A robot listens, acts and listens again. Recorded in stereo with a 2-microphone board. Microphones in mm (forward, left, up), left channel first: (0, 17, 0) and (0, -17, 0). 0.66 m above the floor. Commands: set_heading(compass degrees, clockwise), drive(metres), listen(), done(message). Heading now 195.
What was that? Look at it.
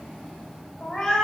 set_heading(165)
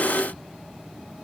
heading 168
listen()
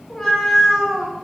set_heading(198)
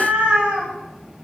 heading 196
set_heading(326)
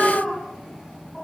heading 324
set_heading(309)
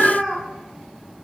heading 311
done("Found it: a cat meowing, straight ahead.")